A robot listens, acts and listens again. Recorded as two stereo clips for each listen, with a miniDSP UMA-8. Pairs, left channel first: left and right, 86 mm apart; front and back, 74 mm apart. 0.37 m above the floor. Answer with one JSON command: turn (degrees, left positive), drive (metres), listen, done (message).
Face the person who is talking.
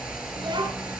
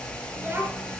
{"turn": -120}
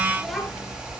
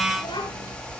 {"done": "Facing the child speaking."}